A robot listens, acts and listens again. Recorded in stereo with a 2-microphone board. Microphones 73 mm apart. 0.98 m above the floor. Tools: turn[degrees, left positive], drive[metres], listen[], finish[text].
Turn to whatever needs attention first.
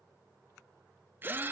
Action: listen[]
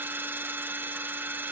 Action: listen[]
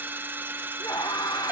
Thought: The scream: about 65° left or 115° left.
Action: turn[65]
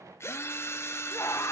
Thought: So it is at 45° left.
Action: turn[45]
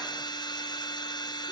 Action: listen[]
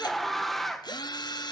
Action: finish[Facing the scream.]